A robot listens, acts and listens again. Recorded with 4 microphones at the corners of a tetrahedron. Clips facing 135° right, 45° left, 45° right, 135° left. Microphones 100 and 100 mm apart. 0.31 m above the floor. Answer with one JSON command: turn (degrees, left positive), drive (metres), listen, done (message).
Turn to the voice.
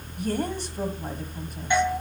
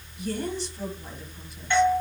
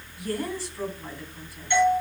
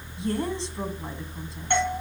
{"turn": -165}
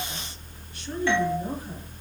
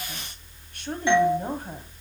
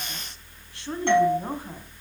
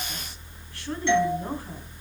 {"turn": 20}
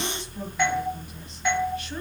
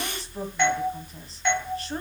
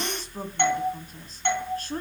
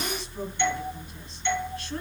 {"listen": true}
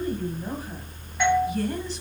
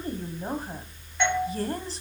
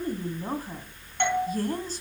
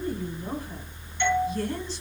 {"done": "Facing the woman speaking, 1 to 2 m away."}